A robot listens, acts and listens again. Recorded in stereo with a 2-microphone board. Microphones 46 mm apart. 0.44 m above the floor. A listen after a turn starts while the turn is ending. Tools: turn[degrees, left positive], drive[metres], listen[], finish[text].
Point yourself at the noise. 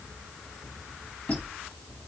Thought: The squeak: about 30° left or 150° left.
Action: turn[30]
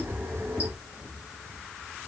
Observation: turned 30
Thought: So it is at 120° left.
Action: turn[120]
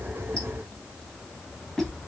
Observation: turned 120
Thought: The squeak is now 10° left.
Action: turn[10]
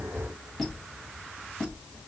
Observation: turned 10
Action: finish[Found it: a squeak, straight ahead, 1 to 2 m away.]